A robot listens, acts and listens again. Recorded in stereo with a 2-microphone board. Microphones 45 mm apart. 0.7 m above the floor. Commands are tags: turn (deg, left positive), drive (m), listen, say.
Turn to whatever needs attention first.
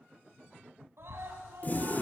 <turn deg="-65"/>
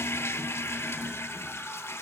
<listen/>
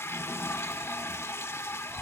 <listen/>
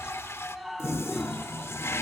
<say>Found it: a scream, straight ahead, over 4 m away.</say>